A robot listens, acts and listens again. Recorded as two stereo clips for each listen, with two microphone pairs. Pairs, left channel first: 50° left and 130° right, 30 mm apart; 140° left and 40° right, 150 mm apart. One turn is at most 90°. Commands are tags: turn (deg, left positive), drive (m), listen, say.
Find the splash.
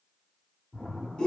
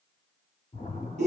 <turn deg="90"/>
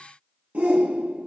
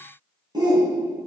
<turn deg="25"/>
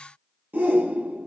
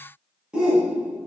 <say>I heard a splash from this way, but can't make it out now.</say>